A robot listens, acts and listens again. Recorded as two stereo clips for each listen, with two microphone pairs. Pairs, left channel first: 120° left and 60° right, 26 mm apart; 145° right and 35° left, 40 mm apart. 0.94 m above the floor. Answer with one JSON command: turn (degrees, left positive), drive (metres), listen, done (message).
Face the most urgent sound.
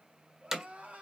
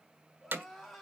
{"turn": -55}
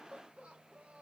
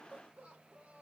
{"turn": -25}
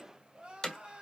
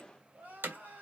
{"turn": -10}
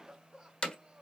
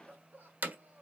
{"done": "Facing the crying."}